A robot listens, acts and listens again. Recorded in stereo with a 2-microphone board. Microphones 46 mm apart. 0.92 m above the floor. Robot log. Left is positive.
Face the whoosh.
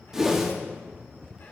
cmd yaw -30
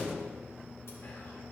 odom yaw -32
cmd idle
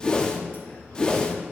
note: So it is at 20° left.
cmd yaw +20
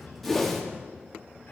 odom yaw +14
end: Found it: a whoosh, straight ahead.